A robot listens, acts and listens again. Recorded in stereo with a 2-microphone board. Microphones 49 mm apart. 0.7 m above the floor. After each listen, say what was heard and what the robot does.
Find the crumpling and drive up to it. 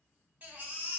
Keep listening.
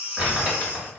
The crumpling: about 25° right or 155° right. Turn 25° right.
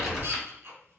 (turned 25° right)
Drive 1.0 m forward.
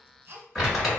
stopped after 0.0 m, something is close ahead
Something is in my way. I am facing the crumpling but have not reached it.